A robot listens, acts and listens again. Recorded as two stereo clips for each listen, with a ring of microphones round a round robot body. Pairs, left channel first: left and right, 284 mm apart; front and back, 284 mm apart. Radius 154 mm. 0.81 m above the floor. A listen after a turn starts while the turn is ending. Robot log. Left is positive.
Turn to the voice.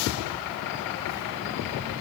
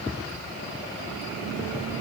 cmd idle
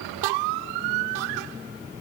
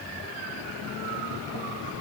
cmd idle
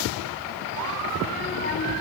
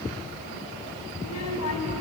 note: The child speaking: 30° left.
cmd yaw +30
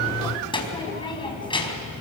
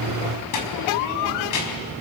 note: The child speaking is now 15° left.
cmd yaw +15
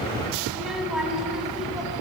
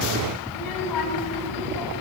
end: Found it: a child speaking, straight ahead.